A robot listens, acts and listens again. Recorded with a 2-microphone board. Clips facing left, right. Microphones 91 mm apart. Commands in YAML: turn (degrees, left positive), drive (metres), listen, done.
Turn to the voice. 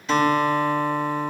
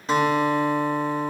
listen: true
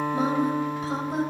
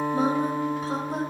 turn: -35
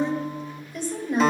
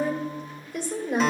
turn: -110
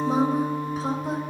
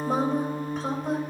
done: "Facing the woman speaking, 2 to 4 m away."